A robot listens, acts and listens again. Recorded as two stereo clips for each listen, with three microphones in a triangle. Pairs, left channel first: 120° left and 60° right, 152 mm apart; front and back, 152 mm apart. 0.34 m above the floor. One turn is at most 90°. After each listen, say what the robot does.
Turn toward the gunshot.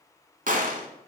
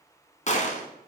Turn 35° right.
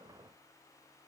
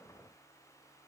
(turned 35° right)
I heard a gunshot from this way, but can't make it out now.